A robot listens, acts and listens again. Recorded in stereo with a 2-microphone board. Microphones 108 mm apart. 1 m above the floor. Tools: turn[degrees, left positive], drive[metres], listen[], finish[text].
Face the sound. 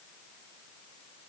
Action: listen[]
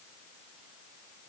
Action: listen[]
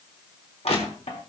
Action: turn[90]
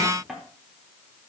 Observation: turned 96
Action: finish[Facing the crushing, 2 to 4 m away.]